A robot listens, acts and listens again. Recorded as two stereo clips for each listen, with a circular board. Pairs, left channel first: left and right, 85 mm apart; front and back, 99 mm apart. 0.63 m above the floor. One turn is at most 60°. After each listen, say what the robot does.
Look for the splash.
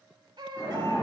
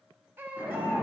Turn 60° left.
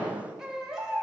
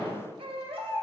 Turn 55° left.
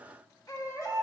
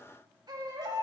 I heard a splash from this way, but can't make it out now.